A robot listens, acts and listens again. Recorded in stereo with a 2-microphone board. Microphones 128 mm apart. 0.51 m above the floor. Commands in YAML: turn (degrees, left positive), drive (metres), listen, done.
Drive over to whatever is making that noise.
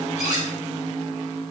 turn: 70
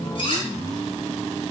turn: 40
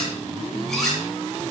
drive: 1.0
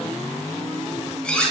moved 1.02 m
turn: 10
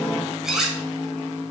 drive: 1.0
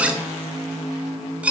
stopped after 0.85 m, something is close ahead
turn: -10
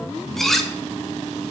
done: "Arrived at the cutlery clinking, straight ahead."